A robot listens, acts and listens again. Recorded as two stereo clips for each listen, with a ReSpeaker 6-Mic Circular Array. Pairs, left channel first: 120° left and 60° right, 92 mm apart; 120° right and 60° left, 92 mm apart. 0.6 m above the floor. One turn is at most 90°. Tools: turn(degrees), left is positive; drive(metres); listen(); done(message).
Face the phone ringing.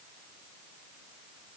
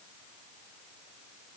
listen()
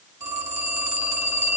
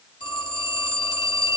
turn(degrees=-90)
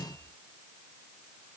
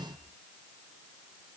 turn(degrees=-30)
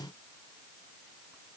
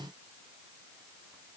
listen()
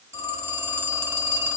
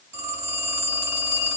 done("Facing the phone ringing.")